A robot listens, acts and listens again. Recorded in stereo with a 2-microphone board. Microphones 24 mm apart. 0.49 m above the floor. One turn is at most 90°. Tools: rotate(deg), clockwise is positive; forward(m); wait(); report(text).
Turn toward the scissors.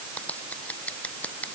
rotate(-90)
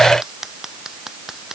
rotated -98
rotate(20)
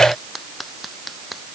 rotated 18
report("Facing the scissors.")